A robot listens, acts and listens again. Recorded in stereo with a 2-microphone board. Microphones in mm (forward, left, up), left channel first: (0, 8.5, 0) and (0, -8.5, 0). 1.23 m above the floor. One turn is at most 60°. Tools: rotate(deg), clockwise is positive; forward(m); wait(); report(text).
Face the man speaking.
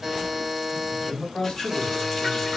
rotate(-55)
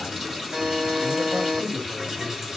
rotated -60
rotate(30)
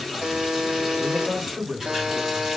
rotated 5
rotate(35)
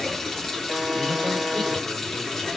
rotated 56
rotate(-20)
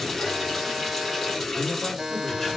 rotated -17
wait()
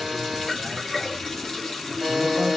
report("Facing where the man speaking came from. I can't hear it now.")